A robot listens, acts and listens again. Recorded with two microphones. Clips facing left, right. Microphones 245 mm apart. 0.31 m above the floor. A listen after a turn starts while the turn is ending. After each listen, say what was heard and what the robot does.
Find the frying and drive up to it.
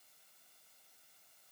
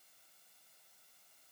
Keep listening.
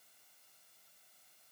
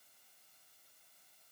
Keep listening.
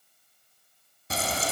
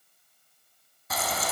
The frying: about 30° left or 150° left. Turn 30° left.
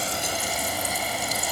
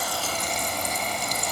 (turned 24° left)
So it is at 10° left. Turn 10° left.
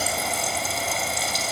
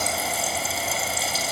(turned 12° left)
Drive 1.0 m forward.
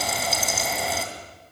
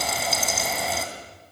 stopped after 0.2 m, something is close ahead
Blocked. The frying is further on, straight ahead.